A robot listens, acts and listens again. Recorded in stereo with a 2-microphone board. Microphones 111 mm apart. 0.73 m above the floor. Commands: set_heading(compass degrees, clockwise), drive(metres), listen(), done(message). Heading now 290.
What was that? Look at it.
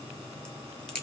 set_heading(260)
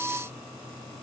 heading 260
listen()
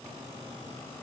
done("I heard a crack, but can't make it out now. It was about 20° right or 140° left.")